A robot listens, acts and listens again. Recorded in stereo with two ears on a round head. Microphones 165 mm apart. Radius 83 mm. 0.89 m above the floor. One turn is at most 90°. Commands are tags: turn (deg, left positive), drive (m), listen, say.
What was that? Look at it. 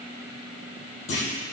<turn deg="75"/>
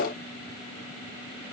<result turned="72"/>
<listen/>
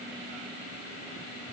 <say>I heard a clunk, but can't make it out now. It was about 5° left or 35° left.</say>